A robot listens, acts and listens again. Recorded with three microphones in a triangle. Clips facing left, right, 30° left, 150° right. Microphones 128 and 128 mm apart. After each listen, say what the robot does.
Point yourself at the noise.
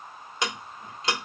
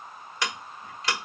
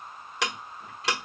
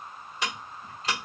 Turn 20° left.
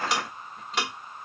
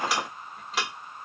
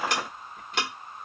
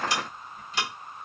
Found it: ticking, straight ahead, under 1 m away.